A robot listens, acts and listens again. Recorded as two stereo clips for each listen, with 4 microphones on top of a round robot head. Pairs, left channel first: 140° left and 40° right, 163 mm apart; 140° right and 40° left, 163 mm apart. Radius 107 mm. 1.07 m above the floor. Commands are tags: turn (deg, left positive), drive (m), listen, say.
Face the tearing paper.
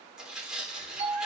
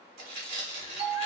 <turn deg="45"/>
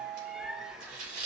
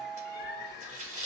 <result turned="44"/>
<say>Found it: tearing paper, straight ahead, over 4 m away.</say>